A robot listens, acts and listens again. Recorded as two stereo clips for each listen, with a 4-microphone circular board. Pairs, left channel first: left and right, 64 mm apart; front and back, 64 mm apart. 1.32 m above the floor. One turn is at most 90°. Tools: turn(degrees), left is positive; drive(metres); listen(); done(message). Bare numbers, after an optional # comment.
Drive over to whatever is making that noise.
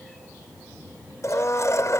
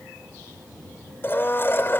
# The blender: 50° left.
turn(50)
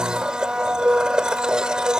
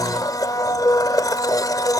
# The blender is now 10° right.
turn(-10)
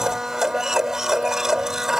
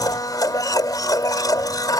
drive(1.0)
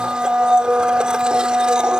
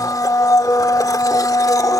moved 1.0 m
# The blender is now 15° right.
turn(-15)
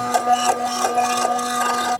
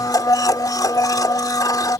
drive(1.0)
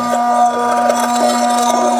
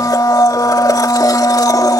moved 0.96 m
drive(1.0)
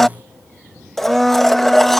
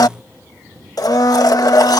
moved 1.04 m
drive(1.0)
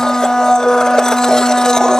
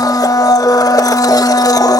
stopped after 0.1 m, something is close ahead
# The blender is now 10° left.
turn(10)
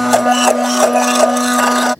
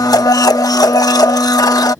done("I am next to the blender.")